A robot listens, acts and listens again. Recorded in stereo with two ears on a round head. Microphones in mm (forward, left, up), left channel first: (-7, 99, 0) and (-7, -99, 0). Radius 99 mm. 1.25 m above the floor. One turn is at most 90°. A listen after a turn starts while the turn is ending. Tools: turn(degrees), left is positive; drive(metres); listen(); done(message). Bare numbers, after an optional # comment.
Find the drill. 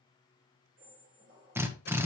turn(-30)
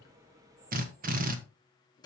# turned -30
# So it is at 135° right.
turn(-90)
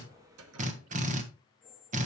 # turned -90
# The drill is now 40° right.
turn(-40)
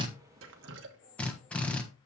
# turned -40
done("Found it: a drill, straight ahead, 1 to 2 m away.")